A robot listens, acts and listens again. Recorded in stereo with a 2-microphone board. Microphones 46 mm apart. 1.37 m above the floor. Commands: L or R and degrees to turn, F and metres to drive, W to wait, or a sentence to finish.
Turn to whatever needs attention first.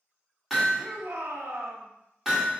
R75
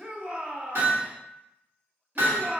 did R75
R30
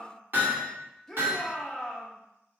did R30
L10
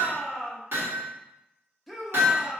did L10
Facing the shout.